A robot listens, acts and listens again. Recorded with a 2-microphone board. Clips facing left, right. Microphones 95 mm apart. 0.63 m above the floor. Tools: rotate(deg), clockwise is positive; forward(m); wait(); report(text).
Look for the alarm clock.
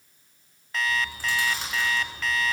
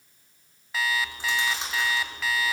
rotate(30)
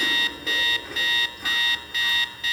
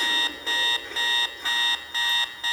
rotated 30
rotate(145)
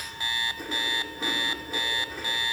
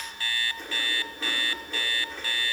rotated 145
rotate(-20)
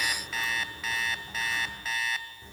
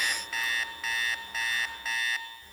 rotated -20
report("Facing the alarm clock.")